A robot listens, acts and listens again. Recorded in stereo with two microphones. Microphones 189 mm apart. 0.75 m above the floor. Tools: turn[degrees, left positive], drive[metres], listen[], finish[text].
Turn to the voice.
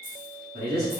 Thought: The man speaking: about 55° right or 125° right.
Action: turn[-55]
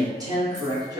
Thought: So it is at 25° right.
Action: turn[-25]
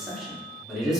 Action: finish[Found it: a man speaking, straight ahead.]